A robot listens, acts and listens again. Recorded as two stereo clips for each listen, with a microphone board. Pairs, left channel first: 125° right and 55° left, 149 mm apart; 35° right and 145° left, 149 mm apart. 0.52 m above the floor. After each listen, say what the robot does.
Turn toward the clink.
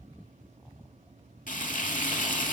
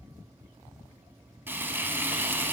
Keep listening.
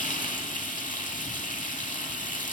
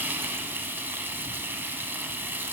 Keep listening.
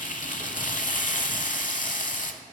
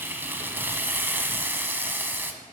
I can't make out a clink to turn to.